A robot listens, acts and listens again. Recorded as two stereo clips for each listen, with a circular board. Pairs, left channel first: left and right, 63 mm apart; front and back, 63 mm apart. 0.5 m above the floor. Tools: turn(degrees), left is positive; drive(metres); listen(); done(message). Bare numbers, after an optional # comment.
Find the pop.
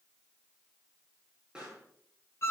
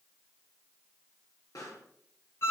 # The pop: 15° right.
turn(-15)
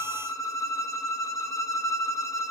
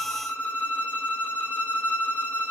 done("Facing where the pop came from. I can't hear it now.")